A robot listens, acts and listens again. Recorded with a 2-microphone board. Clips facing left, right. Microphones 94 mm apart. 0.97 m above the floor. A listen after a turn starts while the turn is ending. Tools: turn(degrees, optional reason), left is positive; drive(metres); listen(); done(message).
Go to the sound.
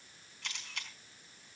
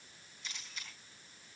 turn(degrees=70, reason="The camera shutter: about 70° left or 110° left.")
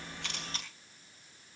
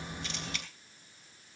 turn(degrees=35, reason="So it is at 35° left.")
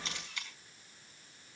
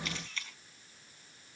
turn(degrees=15, reason="The camera shutter is now 15° left.")
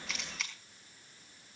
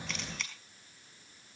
drive(metres=1.0)
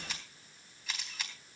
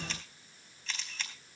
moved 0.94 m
turn(degrees=10, reason="The camera shutter is now 10° left.")
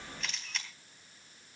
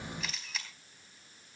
drive(metres=1.0)
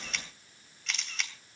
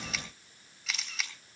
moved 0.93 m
drive(metres=1.0)
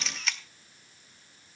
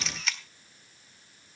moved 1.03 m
drive(metres=1.0)
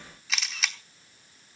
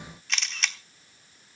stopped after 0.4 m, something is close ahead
done("I am next to the camera shutter.")